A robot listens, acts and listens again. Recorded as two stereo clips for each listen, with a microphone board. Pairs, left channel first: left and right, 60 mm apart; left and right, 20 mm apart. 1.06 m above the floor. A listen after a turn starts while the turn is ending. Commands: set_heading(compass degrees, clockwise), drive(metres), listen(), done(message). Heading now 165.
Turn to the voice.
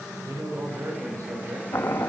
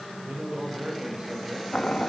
set_heading(235)
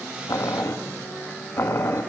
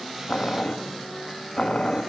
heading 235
listen()
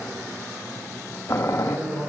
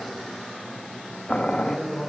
set_heading(270)
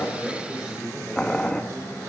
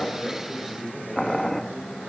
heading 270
done("Found it: a man speaking, straight ahead, over 4 m away.")